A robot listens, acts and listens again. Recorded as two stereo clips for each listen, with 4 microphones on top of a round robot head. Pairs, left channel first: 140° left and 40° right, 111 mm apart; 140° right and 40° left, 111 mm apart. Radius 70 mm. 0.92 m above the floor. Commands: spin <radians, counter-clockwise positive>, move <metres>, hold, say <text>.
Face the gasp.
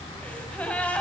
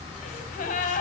spin -2.44
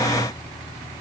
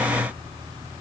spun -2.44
say I heard a gasp from this way, but can't make it out now.